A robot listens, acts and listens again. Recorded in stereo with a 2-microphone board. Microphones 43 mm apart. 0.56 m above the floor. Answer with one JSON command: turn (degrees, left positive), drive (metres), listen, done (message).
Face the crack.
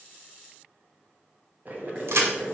{"turn": -90}
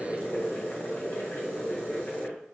{"done": "I heard a crack from this way, but can't make it out now."}